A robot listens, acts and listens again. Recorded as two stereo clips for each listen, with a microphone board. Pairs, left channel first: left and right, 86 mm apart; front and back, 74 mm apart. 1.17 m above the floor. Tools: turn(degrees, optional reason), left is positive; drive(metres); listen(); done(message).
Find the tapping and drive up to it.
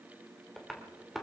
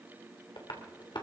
drive(metres=1.0)
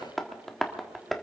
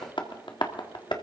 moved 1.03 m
drive(metres=1.0)
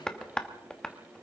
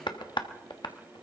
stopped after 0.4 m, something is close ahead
turn(degrees=10, reason="The tapping is now 10° left.")
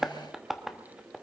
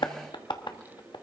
done("I am next to the tapping.")